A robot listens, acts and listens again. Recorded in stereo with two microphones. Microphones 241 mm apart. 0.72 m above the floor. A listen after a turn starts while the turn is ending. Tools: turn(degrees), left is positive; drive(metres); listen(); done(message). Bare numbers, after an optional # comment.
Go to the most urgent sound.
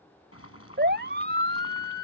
# The siren: about 45° right or 135° right.
turn(-45)
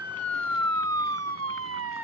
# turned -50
# So it is at 85° right.
turn(-85)
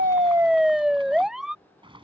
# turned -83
drive(1.0)
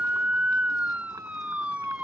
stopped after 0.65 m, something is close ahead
done("Blocked. The siren is further on, straight ahead.")